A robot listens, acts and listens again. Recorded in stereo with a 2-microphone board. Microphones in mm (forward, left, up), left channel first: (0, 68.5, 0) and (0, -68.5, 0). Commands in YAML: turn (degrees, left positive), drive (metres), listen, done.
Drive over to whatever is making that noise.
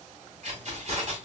turn: -50
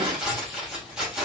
drive: 1.0
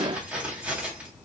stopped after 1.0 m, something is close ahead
turn: -10
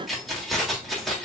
done: "Arrived at the keys jangling, straight ahead."